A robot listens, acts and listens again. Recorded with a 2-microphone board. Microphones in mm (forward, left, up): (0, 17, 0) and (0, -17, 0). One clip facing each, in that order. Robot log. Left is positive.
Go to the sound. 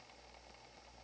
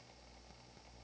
cmd idle
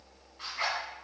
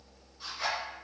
cmd yaw +90
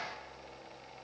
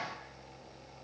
cmd idle
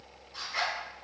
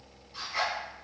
cmd fwd 1.0
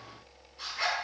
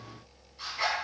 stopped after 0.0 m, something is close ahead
end: Blocked. The zipper is further on, straight ahead.